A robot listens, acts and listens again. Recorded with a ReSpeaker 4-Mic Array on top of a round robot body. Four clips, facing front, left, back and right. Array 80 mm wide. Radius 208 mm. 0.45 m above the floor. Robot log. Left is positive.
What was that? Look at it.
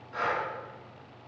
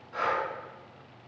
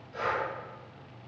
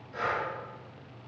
note: The breathing: 45° left.
cmd yaw +45
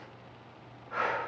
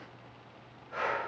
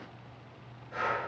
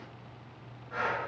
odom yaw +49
end: Facing the breathing.